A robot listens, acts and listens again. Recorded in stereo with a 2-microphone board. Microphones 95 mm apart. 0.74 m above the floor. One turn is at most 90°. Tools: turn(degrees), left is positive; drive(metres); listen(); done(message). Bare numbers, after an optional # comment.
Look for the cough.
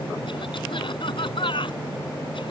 # The cough: about 65° left or 115° left.
turn(65)
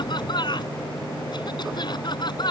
# So it is at 55° left.
turn(55)
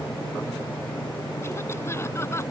listen()
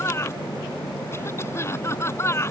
# The cough is now 30° left.
turn(30)
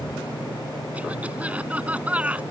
# The cough is now 15° right.
turn(-15)
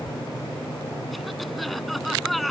done("Facing the cough.")